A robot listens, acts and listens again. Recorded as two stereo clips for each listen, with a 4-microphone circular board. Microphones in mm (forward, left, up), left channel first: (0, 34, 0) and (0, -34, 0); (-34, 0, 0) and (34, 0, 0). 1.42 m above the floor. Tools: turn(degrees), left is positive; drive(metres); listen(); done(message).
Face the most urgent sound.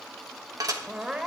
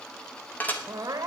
turn(degrees=-10)
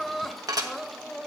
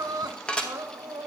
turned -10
done("Facing the crying, 1 to 2 m away.")